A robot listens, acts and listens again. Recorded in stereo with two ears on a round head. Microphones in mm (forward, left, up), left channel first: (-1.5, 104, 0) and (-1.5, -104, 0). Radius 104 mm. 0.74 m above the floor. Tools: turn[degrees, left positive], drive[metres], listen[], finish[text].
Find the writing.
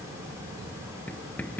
Action: turn[30]
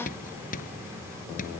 Thought: So it is at 145° left.
Action: turn[145]
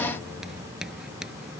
Action: finish[Found it: writing, straight ahead.]